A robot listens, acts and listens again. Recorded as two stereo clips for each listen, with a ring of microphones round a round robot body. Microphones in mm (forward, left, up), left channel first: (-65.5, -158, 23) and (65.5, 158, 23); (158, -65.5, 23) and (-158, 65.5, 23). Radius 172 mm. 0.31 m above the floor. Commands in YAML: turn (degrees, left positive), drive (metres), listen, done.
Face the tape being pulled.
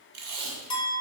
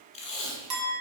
turn: 50
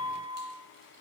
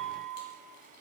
listen: true
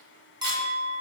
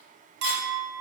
listen: true
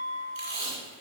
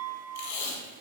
turn: 25
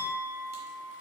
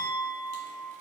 listen: true
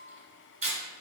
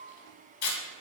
done: "Facing the tape being pulled, 1 to 2 m away."